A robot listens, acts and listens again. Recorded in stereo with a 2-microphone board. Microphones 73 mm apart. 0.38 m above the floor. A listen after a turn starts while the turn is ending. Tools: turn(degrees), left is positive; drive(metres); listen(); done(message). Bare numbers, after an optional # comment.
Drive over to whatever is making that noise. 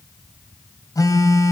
# The phone buzzing: about 55° left or 125° left.
turn(55)
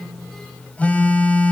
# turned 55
# So it is at 25° left.
turn(25)
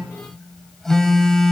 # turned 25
# The phone buzzing is now 10° left.
turn(10)
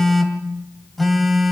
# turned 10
drive(1.0)
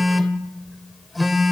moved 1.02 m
drive(1.0)
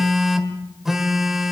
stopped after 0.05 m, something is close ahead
done("I am next to the phone buzzing.")